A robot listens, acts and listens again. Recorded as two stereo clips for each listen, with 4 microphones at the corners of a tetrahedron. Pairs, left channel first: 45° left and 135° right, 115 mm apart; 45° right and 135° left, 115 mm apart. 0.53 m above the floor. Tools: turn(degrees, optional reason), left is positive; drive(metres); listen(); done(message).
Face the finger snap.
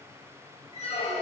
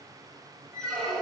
listen()
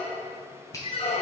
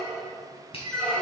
turn(degrees=-15, reason="The finger snap: 15° right.")
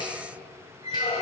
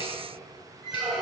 listen()
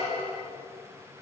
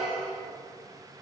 listen()
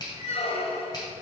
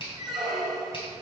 done("Facing the finger snap, 2 to 4 m away.")